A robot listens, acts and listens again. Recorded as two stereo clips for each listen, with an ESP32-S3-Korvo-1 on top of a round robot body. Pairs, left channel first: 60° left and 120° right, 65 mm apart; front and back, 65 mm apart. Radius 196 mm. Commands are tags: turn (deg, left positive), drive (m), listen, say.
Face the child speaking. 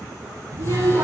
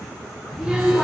<turn deg="-85"/>
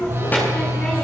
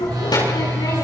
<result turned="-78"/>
<say>Found it: a child speaking, straight ahead.</say>